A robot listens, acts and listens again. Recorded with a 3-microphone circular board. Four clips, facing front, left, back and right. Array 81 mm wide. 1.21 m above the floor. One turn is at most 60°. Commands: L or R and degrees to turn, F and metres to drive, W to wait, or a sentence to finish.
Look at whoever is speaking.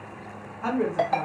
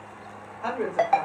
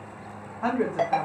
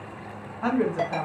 R60
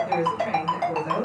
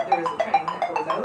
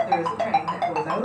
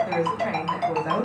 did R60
R60
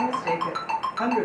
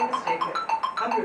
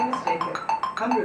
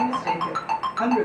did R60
R40
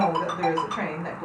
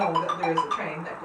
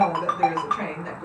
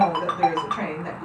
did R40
R10
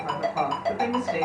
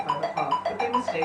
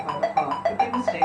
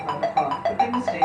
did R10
Facing the woman speaking, 1 to 2 m away.